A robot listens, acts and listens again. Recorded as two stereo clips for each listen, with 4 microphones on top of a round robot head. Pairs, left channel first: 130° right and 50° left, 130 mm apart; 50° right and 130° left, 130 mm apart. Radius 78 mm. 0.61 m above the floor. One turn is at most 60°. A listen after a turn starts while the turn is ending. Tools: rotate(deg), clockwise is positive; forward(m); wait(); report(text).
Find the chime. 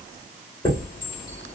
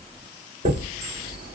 rotate(-60)
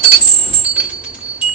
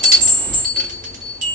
rotate(-60)
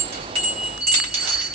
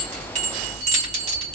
rotate(-60)
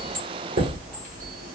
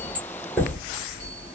rotate(-30)
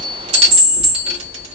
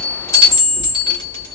report("Found it: a chime, straight ahead.")